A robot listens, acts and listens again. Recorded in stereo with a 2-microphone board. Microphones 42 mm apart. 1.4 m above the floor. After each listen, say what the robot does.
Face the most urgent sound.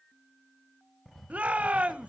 Turn 35° right.
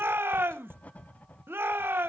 Turn 110° right.
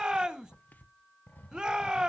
Turn 15° right.
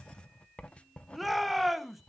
Found it: a shout, straight ahead.